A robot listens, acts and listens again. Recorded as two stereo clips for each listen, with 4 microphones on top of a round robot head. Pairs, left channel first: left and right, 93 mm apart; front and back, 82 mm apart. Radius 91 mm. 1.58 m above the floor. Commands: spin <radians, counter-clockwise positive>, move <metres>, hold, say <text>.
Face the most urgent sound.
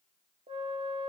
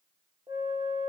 hold
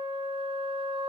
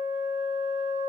hold
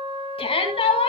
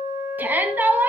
spin 1.92
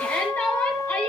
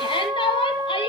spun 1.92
spin 0.26
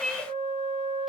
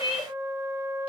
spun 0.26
say Found it: a shout, straight ahead.